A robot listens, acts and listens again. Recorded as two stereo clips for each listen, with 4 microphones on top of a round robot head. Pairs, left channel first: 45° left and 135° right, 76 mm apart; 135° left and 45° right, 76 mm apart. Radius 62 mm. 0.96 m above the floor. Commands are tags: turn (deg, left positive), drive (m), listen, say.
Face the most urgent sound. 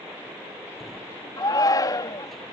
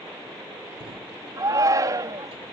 <say>Found it: a shout, straight ahead.</say>